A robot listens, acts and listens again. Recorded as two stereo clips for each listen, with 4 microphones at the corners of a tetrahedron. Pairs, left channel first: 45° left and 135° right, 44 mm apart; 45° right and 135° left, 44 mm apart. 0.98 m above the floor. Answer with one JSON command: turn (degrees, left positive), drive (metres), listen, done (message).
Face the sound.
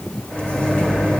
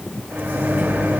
{"turn": 110}
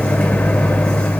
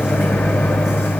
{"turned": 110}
{"turn": -20}
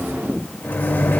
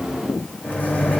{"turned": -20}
{"done": "Facing the microwave."}